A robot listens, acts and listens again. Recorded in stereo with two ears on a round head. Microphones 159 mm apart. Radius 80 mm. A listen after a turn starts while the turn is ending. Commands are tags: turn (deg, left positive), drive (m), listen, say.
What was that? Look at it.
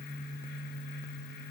<listen/>
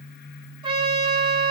<turn deg="-30"/>
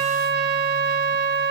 <turn deg="-120"/>
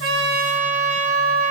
<turn deg="-40"/>
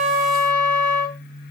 <say>Facing the trumpet.</say>